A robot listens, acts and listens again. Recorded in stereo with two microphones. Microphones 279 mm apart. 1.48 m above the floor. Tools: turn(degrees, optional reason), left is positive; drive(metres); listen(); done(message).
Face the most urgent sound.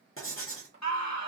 turn(degrees=90)
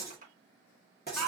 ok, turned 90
done("Found it: a scream, straight ahead, 1 to 2 m away.")